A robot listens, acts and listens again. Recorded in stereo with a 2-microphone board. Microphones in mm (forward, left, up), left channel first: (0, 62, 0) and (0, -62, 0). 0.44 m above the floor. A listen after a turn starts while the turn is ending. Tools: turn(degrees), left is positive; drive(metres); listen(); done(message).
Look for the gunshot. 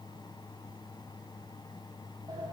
listen()
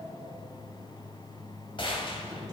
turn(degrees=45)
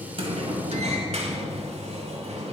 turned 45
listen()
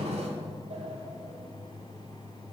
done("I heard a gunshot, but can't make it out now. It was about straight ahead or 90° left.")